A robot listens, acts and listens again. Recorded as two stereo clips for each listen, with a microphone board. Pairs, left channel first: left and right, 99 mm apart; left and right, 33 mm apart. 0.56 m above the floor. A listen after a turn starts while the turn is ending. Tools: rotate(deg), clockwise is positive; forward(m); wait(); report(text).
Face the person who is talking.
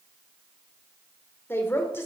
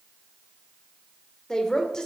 rotate(-25)
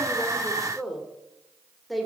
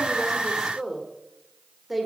report("Facing the woman speaking, 1 to 2 m away.")